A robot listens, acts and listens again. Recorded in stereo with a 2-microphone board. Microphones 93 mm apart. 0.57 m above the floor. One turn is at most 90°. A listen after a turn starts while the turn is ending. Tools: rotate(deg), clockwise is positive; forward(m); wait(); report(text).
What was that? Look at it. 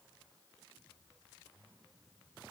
wait()
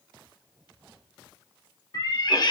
rotate(-55)
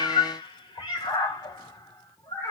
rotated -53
rotate(-40)
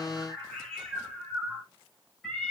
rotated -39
report("Facing the cat meowing, 1 to 2 m away.")